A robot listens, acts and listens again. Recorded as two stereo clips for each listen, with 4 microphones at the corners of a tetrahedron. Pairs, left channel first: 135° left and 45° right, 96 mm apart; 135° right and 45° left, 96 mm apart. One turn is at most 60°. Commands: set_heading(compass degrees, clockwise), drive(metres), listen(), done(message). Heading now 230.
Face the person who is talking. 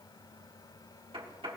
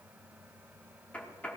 listen()
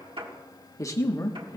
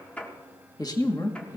set_heading(290)
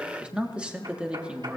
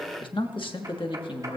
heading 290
set_heading(350)
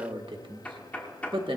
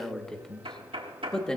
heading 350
set_heading(45)
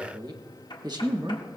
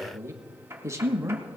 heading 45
set_heading(55)
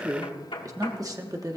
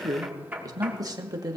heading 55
done("Facing the man speaking, 1 to 2 m away.")